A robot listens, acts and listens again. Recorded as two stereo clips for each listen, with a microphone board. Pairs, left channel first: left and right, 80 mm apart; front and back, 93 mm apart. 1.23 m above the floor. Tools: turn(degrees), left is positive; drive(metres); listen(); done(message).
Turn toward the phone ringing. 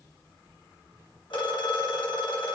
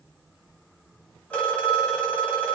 turn(degrees=75)
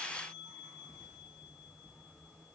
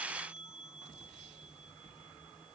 listen()
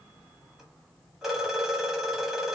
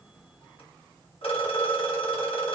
done("Facing the phone ringing, 1 to 2 m away.")